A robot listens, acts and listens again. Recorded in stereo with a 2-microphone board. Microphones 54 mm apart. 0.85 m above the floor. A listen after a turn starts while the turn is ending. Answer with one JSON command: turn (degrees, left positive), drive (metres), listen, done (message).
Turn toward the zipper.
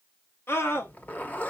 {"turn": 30}
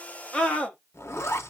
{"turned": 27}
{"turn": 120}
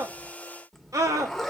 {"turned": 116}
{"done": "Facing the zipper, under 1 m away."}